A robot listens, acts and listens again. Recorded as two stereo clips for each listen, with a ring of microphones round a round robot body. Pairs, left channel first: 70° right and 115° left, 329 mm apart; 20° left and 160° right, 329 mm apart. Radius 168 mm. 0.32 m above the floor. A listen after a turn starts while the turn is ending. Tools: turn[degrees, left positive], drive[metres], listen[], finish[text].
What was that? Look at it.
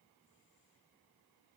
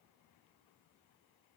Action: listen[]
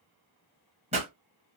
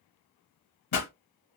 Thought: The pop: 45° left.
Action: turn[45]
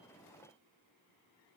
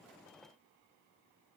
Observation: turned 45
Action: finish[Facing where the pop came from. I can't hear it now.]